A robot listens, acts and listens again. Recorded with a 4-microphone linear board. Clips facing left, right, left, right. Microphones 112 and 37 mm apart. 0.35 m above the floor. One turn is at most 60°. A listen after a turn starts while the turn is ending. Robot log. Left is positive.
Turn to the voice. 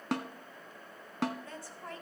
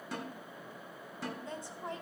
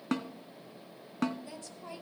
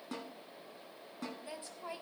note: The woman speaking: about 20° right or 160° right.
cmd yaw -20
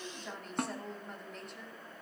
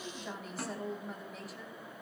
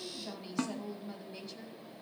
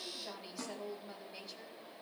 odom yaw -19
end: Facing the woman speaking.